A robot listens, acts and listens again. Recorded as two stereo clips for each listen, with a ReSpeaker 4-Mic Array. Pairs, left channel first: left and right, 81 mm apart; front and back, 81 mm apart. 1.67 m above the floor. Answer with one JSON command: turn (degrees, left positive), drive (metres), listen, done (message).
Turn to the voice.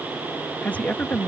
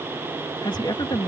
{"turn": 20}
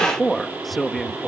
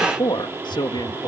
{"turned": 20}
{"done": "Found it: a man speaking, straight ahead."}